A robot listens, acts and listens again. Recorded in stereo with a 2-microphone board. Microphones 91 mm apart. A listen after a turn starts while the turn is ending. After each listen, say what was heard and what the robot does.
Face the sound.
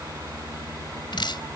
The dripping: about 60° left or 120° left. Turn 60° left.
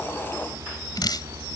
So it is at 55° left. Turn 55° left.
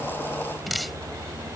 Found it: dripping, straight ahead.